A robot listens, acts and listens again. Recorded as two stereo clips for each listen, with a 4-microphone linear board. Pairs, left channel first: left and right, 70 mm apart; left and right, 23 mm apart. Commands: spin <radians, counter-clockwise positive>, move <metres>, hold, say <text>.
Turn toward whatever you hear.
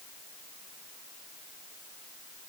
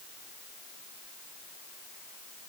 hold
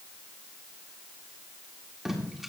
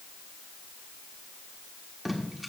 spin -0.52
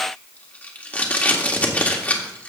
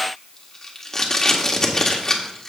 spin 0.44
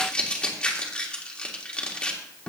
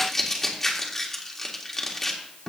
spin 0.35
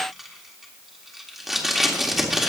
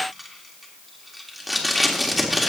say Found it: tape being pulled, straight ahead.